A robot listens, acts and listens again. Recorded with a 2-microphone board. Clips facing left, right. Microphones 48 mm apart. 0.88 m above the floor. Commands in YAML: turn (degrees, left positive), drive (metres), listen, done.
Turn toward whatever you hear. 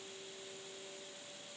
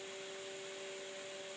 listen: true
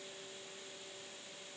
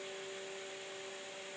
listen: true
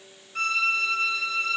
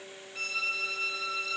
turn: 55
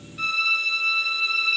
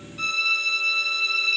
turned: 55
done: "Facing the violin."